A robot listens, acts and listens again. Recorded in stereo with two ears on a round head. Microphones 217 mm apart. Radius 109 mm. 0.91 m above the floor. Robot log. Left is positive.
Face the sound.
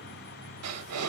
note: The breathing: about 70° right or 110° right.
cmd yaw -70
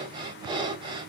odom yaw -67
note: So it is at 20° right.
cmd yaw -20
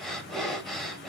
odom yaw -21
end: Facing the breathing, under 1 m away.